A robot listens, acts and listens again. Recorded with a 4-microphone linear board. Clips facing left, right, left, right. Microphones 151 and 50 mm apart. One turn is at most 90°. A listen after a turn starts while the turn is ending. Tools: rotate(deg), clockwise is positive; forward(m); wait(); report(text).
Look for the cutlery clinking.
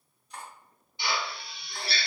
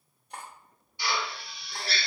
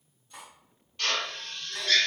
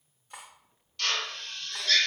rotate(55)
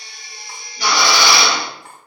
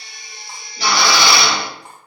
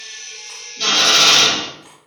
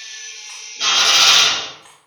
rotate(25)
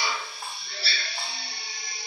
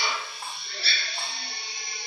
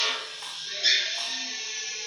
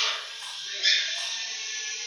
wait()
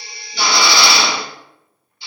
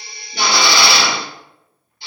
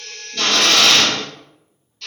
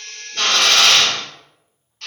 wait()
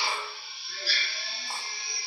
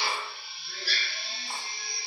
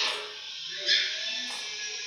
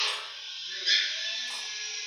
report("I heard cutlery clinking from this way, but can't make it out now.")